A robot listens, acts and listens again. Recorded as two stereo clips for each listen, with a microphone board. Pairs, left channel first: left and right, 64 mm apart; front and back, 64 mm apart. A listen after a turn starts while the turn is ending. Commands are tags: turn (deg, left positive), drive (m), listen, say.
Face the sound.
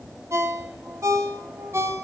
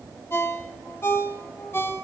<turn deg="-50"/>
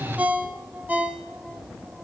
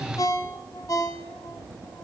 <turn deg="-25"/>
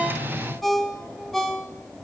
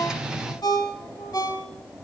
<say>Facing the ringtone, 1 to 2 m away.</say>